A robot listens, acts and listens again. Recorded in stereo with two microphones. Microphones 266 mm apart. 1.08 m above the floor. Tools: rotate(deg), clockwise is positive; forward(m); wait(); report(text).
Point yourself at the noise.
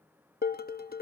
rotate(-35)
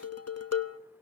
rotate(-110)
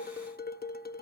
rotate(-35)
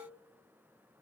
wait()
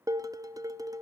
rotate(15)
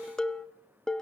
report("Found it: dishes clattering, straight ahead.")